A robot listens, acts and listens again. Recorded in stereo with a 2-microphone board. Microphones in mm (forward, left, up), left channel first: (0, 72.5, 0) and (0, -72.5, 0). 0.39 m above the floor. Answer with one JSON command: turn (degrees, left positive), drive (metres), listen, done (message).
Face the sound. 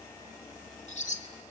{"turn": 55}
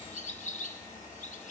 {"turn": 65}
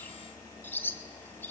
{"turn": 15}
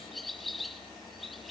{"done": "Found it: a bird, straight ahead, 1 to 2 m away."}